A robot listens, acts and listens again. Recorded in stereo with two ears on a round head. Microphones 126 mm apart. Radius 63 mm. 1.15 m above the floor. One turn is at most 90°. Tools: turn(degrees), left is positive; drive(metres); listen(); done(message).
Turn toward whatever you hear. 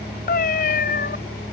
turn(degrees=65)
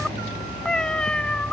done("Facing the cat meowing.")